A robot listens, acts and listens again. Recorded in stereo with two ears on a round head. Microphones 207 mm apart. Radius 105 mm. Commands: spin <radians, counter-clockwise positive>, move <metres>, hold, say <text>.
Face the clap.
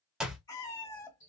spin -0.52
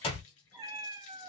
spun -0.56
spin 0.52
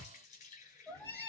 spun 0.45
say Found it: a clap, straight ahead, 1 to 2 m away.